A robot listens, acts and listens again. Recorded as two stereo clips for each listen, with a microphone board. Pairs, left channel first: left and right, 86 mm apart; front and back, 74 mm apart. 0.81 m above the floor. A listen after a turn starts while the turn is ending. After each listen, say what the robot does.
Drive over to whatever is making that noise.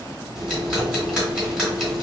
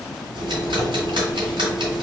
Turn 170° right.
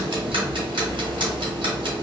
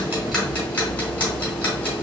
Turn 65° right.
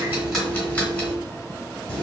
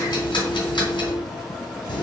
Turn 20° left.
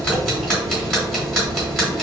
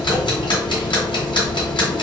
Drive 1.0 m forward.
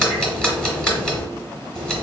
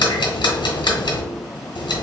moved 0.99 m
Drive 1.0 m forward.
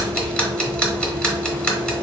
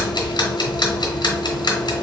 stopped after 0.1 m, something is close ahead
Turn 10° left.
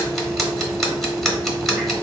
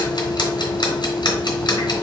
I am next to the ticking.